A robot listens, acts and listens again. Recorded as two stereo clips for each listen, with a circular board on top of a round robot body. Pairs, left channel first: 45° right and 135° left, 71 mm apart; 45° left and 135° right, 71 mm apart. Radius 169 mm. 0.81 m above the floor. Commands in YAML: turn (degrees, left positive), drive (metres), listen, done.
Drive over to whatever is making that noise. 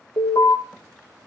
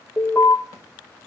turn: -15
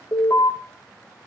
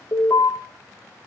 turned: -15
drive: 1.0
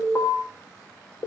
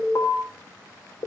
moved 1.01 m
drive: 1.0
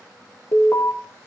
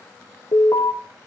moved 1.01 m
turn: 10
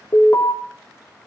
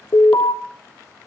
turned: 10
drive: 1.0
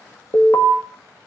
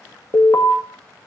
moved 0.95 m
drive: 1.0
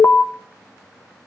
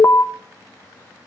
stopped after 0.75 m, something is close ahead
done: "Arrived at the alarm, straight ahead."